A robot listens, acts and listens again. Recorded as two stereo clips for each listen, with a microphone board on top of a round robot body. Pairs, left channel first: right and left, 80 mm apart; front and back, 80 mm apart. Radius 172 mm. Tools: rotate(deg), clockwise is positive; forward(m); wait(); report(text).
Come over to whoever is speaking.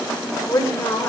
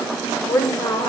rotate(25)
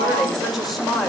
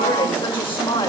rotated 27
forward(1.0)
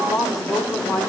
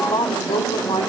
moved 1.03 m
forward(1.0)
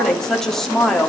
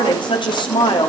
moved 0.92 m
forward(1.0)
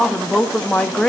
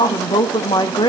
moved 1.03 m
rotate(10)
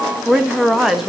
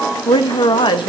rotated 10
forward(1.0)
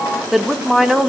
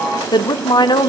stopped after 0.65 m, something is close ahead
report("I am next to the woman speaking.")